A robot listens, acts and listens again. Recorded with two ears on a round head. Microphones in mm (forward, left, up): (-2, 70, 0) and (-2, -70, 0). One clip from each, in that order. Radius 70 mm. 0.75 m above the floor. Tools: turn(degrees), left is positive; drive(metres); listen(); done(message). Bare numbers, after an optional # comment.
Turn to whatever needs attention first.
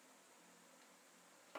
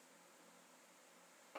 listen()
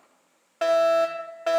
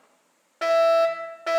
# The fire alarm: about 25° left or 155° left.
turn(25)
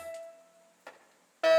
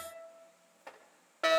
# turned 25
done("Facing the fire alarm, 2 to 4 m away.")